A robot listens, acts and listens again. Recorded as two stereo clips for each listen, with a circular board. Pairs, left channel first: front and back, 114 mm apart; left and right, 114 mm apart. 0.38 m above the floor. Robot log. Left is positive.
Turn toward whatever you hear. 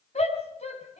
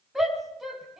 end: Facing the shout.